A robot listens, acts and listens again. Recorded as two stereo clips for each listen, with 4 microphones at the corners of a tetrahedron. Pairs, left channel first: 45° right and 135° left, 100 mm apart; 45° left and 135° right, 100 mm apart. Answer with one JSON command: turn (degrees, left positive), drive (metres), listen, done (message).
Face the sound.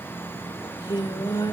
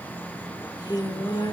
{"done": "Found it: singing, straight ahead."}